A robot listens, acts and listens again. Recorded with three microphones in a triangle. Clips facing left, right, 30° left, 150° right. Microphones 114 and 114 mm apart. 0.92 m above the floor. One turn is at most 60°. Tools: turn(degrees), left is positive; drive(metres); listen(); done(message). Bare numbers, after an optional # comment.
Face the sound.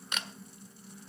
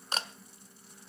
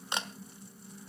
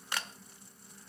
# The camera shutter: 35° right.
turn(-35)
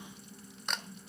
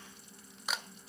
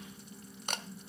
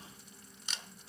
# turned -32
done("Facing the camera shutter.")